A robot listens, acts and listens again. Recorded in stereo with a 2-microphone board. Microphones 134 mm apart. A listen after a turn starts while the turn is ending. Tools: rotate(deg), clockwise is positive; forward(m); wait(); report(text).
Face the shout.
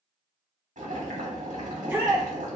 rotate(30)
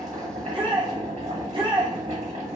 rotate(135)
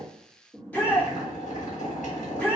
rotate(-15)
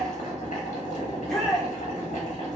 report("Facing the shout.")